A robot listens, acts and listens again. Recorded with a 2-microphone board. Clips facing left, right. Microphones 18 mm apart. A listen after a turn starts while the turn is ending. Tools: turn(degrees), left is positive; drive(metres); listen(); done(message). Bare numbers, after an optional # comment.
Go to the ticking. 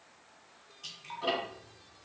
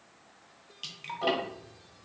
# The ticking: about 50° right or 130° right.
turn(-50)
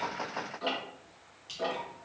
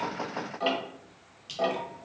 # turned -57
# So it is at 70° right.
turn(-70)
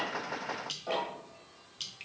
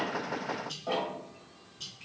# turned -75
drive(1.0)
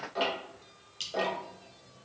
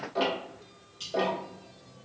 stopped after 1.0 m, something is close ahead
# The ticking is now 10° left.
turn(10)
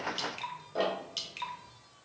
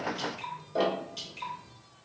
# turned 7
done("Arrived at the ticking, straight ahead.")